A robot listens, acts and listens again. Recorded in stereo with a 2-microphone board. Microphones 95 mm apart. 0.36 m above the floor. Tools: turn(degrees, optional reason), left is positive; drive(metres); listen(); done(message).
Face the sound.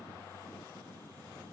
listen()
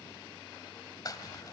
turn(degrees=40, reason="The crumpling: about 40° left or 140° left.")
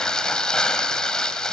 turn(degrees=10, reason="So it is at 10° left.")
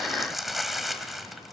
done("Facing the crumpling.")